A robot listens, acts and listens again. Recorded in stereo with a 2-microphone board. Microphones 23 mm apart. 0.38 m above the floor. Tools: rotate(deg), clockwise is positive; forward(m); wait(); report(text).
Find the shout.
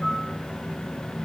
wait()
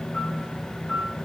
wait()
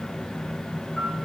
report("I can't make out a shout, only a piano.")